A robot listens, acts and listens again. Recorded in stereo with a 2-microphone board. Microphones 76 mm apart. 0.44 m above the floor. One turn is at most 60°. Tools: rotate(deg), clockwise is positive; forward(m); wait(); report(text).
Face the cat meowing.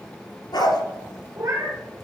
rotate(55)
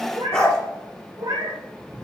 rotate(60)
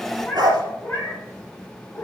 rotate(-25)
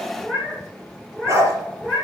report("Found it: a cat meowing, straight ahead.")